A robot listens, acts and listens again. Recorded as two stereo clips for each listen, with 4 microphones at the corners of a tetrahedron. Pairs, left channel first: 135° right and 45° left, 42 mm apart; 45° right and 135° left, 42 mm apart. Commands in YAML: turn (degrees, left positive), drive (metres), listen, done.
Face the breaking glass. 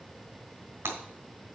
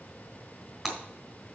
turn: 50
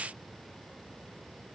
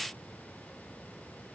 done: "Facing where the breaking glass came from. I can't hear it now."